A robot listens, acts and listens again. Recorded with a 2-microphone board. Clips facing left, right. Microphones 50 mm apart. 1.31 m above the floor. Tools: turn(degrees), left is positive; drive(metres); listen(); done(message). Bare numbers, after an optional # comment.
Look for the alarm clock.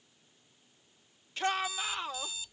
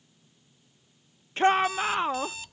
# The alarm clock: about 65° right or 115° right.
turn(-65)
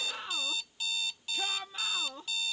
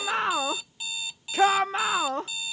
# So it is at 15° right.
turn(-15)
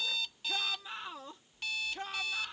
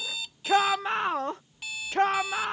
done("Facing the alarm clock.")